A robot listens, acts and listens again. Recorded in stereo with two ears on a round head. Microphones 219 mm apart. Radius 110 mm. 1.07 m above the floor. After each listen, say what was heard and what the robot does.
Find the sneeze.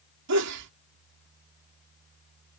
The sneeze: about 75° right or 105° right. Turn 75° right.
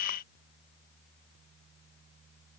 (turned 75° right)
Keep listening.
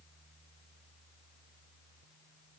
I heard a sneeze, but can't make it out now. It was about straight ahead or 30° right.